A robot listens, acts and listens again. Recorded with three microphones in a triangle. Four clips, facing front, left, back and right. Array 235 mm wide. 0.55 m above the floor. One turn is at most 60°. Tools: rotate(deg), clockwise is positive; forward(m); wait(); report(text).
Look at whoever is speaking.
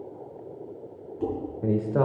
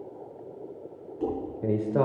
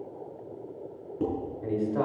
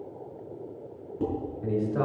rotate(-40)
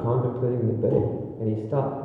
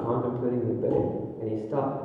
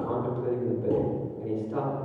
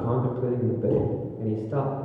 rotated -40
report("Facing the man speaking.")